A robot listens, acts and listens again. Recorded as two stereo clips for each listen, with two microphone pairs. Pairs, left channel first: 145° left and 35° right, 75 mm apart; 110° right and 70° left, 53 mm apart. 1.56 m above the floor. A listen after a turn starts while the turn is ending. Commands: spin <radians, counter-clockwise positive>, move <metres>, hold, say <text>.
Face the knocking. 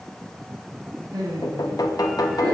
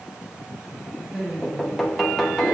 spin 2.88
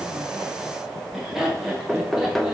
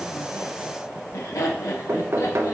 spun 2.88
spin 1.05
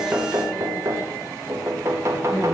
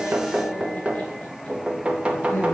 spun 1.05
say Facing the knocking.